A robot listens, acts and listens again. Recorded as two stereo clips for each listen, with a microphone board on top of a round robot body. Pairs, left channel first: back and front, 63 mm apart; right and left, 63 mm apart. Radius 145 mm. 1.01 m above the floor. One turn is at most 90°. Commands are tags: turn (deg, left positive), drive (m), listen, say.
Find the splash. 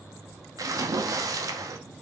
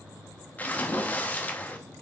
<turn deg="-25"/>
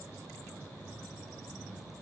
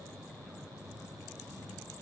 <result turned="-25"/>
<say>Facing where the splash came from. I can't hear it now.</say>